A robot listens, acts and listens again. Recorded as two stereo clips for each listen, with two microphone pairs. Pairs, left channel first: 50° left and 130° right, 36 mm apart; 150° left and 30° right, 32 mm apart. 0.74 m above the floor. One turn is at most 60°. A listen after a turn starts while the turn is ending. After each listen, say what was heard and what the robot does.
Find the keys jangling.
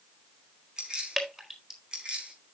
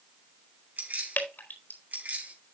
The keys jangling: 65° right. Turn 60° right.
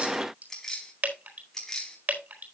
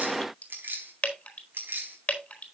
The keys jangling is now 25° right. Turn 25° right.
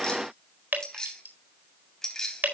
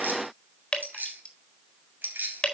The keys jangling is now 25° right. Turn 25° right.
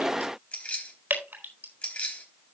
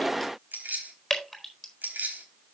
Facing the keys jangling.